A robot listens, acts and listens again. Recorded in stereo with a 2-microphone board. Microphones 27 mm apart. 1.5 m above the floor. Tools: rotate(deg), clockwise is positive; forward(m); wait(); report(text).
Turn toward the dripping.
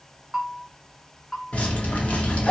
rotate(-60)
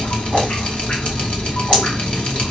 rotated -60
rotate(-50)
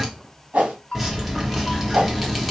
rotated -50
report("Facing the dripping, 1 to 2 m away.")